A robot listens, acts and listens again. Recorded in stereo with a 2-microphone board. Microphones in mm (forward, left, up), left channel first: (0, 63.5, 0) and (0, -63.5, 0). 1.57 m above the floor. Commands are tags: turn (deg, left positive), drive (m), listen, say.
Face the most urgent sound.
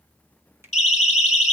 <turn deg="90"/>
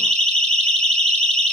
<say>Facing the siren.</say>